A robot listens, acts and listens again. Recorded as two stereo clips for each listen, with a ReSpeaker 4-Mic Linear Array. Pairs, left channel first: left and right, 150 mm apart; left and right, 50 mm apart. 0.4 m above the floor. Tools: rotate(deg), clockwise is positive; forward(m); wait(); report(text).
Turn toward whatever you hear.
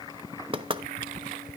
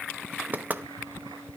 rotate(35)
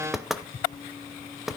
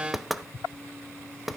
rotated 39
report("Facing the knocking.")